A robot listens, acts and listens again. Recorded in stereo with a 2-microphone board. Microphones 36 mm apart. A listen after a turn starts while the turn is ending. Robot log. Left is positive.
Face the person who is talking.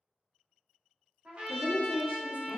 note: The woman speaking: about 35° left or 145° left.
cmd yaw +35
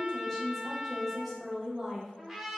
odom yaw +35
end: Facing the woman speaking, under 1 m away.